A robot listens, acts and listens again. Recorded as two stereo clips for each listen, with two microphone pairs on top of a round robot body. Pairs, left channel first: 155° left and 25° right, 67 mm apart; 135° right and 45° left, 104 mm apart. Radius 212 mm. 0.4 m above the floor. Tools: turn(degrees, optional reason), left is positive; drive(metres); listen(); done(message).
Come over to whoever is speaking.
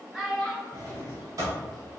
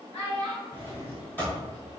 turn(degrees=-120, reason="The child speaking: 120° right.")
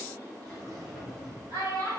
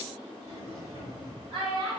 turn(degrees=10, reason="The child speaking is now 10° left.")
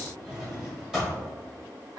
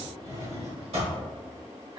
drive(metres=1.0)
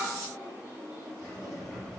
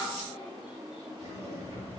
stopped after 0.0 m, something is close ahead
listen()
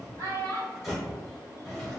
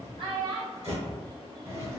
turn(degrees=10, reason="The child speaking is now 10° left.")
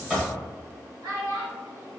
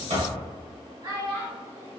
done("Blocked. The child speaking is further on, straight ahead.")